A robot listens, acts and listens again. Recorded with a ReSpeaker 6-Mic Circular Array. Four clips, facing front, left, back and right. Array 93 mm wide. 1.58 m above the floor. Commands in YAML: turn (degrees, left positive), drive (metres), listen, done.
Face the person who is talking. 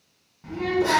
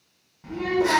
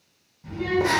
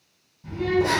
turn: 55
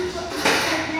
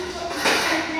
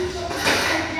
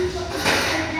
turn: 30
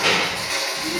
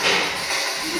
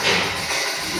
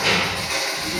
turn: 25
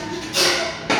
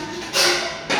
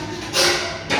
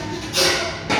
done: "Found it: a child speaking, straight ahead, 1 to 2 m away."